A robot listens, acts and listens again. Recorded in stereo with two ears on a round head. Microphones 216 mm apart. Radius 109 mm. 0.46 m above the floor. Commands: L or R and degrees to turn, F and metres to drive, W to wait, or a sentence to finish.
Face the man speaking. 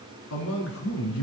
L65
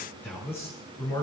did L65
L10
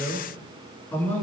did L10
L10
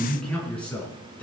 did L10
Found it: a man speaking, straight ahead.